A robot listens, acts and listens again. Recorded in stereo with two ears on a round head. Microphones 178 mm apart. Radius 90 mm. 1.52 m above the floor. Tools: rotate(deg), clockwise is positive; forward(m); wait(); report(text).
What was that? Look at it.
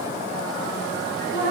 rotate(-65)
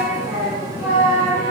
rotate(20)
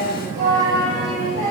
rotate(35)
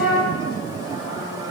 report("Facing the singing.")